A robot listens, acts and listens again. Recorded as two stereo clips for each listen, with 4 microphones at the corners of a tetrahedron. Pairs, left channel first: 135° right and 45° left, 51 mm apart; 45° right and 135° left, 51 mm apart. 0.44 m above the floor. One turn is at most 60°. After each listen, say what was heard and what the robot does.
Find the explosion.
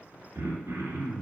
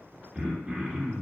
Keep listening.
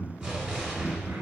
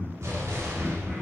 The explosion: 120° left. Turn 60° left.
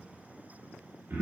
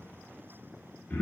Nothing new. It was at 60° left. Turn 60° left.
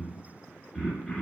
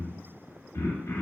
Facing where the explosion came from. I can't hear it now.